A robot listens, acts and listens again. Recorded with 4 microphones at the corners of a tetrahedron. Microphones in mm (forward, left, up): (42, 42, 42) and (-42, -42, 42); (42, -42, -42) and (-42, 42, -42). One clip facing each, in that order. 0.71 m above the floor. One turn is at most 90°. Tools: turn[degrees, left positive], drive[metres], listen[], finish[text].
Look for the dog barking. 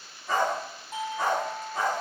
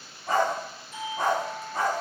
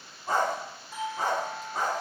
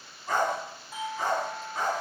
Thought: The dog barking: 90° right.
Action: turn[-90]
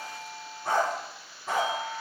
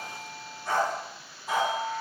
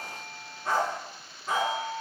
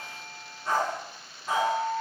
Thought: The dog barking is now 15° left.
Action: turn[15]
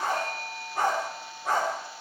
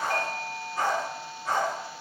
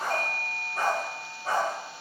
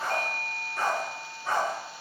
Thought: The dog barking is now 10° left.
Action: turn[10]
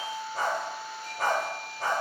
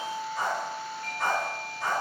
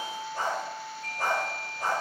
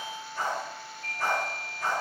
Action: finish[Facing the dog barking.]